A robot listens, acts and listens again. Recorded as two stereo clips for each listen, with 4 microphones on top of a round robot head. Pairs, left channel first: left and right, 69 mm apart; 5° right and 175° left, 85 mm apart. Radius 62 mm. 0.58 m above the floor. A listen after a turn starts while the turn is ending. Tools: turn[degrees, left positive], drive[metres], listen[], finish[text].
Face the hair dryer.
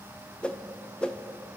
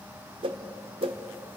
Action: listen[]
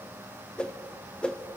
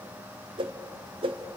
Action: listen[]
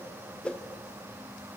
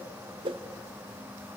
Action: finish[I can't make out a hair dryer to turn to.]